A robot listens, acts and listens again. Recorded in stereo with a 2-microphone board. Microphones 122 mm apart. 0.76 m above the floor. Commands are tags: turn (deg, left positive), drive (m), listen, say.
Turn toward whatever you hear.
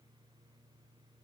<listen/>
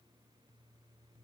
<listen/>
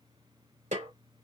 <turn deg="-90"/>
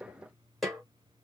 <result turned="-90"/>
<say>Facing the snare drum, 2 to 4 m away.</say>